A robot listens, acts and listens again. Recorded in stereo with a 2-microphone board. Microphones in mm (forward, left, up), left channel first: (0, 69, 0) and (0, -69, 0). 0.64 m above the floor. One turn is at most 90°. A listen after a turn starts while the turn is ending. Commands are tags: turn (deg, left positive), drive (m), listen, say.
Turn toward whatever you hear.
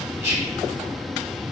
<turn deg="-20"/>
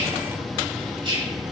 <turn deg="-90"/>
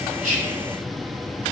<turn deg="-50"/>
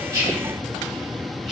<listen/>
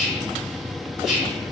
<say>Facing the whispering, 1 to 2 m away.</say>